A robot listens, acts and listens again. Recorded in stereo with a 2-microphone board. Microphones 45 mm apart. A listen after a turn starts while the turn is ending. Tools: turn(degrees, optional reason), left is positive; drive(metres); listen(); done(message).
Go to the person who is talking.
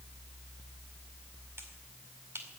listen()
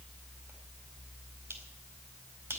listen()
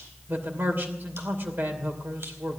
turn(degrees=-55, reason="The man speaking: about 55° right or 125° right.")
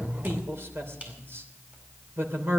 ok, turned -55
turn(degrees=-70, reason="So it is at 70° right.")
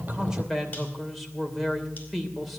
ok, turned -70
drive(metres=1.0)
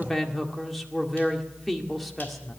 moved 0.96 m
drive(metres=1.0)
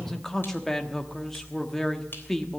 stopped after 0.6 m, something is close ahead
turn(degrees=10, reason="The man speaking is now 10° left.")
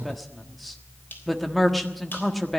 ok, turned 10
done("I am next to the man speaking.")